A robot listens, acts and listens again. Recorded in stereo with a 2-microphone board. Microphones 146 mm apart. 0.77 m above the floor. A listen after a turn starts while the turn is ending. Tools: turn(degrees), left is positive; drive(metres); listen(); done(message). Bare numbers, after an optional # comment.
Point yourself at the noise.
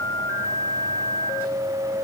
listen()
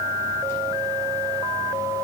listen()
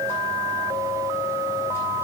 done("I can't make out anything.")